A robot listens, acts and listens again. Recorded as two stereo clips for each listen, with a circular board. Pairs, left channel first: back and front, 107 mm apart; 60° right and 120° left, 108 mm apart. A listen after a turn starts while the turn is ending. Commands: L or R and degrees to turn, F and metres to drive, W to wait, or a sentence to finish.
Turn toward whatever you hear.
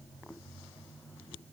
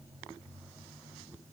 W
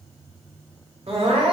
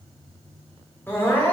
L10
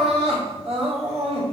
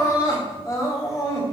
Facing the crying, 2 to 4 m away.